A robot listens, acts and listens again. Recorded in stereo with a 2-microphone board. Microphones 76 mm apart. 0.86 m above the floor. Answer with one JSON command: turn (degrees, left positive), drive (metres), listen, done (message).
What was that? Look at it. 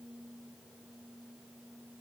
{"listen": true}
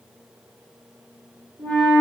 {"turn": -75}
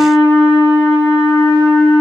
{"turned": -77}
{"turn": -20}
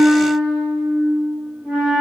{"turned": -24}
{"done": "Facing the flute."}